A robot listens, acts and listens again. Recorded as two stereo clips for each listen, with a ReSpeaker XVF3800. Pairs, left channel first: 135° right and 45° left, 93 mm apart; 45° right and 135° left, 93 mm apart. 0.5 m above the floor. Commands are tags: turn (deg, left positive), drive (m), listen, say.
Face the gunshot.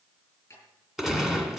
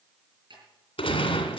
<turn deg="-40"/>
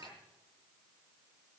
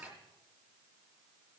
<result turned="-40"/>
<say>I heard a gunshot from this way, but can't make it out now.</say>